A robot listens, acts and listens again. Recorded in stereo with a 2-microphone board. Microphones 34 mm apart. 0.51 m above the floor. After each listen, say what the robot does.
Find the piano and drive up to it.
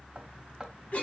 Keep listening.
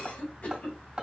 Keep listening.
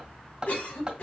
I can't make out a piano to turn to.